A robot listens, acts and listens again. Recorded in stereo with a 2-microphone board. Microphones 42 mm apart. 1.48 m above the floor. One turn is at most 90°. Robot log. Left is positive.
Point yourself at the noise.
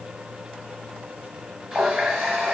note: The running tap: about 20° right or 160° right.
cmd yaw -20
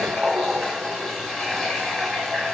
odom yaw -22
end: Found it: a running tap, straight ahead, 1 to 2 m away.